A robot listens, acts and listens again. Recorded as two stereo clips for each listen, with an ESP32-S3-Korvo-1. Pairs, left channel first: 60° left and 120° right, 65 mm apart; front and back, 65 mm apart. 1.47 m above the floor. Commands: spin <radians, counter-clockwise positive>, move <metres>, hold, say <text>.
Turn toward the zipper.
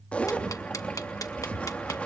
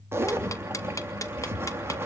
spin 2.27
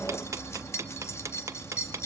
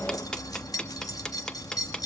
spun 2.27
spin 0.26
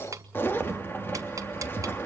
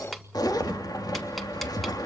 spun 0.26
say Facing the zipper, 1 to 2 m away.